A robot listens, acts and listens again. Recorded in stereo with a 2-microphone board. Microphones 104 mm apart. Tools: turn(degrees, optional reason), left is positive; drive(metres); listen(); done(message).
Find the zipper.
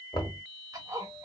turn(degrees=-35, reason="The zipper: about 35° right or 145° right.")
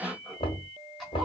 done("Found it: a zipper, straight ahead, 1 to 2 m away.")